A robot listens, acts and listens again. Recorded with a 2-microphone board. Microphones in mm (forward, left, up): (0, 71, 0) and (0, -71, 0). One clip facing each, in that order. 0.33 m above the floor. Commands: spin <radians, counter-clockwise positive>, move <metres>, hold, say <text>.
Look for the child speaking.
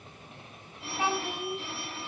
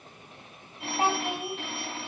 spin -0.70
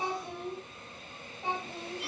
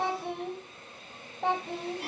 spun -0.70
spin -1.66
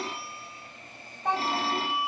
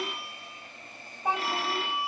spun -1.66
say Found it: a child speaking, straight ahead, 1 to 2 m away.